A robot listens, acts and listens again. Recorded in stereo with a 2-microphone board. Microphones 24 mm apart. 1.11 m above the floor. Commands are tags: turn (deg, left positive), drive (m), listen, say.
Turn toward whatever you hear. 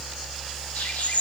<turn deg="90"/>
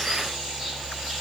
<listen/>
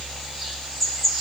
<turn deg="10"/>
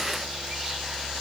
<listen/>
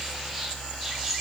<listen/>
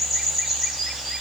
<say>Facing the bird.</say>